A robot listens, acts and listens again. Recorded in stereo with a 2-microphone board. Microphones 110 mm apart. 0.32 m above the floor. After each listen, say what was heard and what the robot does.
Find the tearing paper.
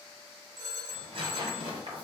The tearing paper: about 60° right or 120° right. Turn 60° right.
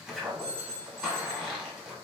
So it is at 10° right. Turn 10° right.
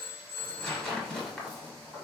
Found it: tearing paper, straight ahead, 1 to 2 m away.